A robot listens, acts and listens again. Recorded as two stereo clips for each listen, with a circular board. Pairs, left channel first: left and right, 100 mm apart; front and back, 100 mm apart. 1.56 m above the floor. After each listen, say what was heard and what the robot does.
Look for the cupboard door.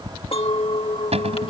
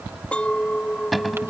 The cupboard door: 90° right. Turn 90° right.
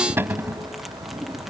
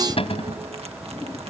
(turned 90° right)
The cupboard door is now 20° right. Turn 20° right.
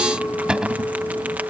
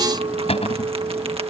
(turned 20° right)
The cupboard door is now 10° right. Turn 10° right.
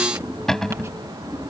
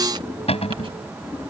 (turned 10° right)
Facing the cupboard door.